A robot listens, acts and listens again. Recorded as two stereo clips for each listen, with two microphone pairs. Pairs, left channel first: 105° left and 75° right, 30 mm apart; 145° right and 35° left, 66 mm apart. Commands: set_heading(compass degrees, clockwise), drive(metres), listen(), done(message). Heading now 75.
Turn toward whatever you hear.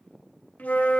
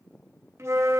set_heading(355)
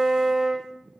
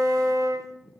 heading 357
done("Facing the flute, 1 to 2 m away.")